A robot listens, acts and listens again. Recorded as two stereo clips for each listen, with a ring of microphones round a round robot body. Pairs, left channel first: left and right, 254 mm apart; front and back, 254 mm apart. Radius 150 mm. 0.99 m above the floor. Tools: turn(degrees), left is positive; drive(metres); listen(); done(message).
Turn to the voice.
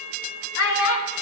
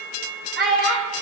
turn(degrees=120)
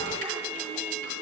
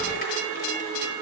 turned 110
turn(degrees=10)
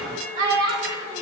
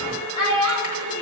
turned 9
turn(degrees=-20)
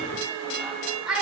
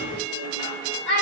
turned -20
done("Found it: a child speaking, straight ahead.")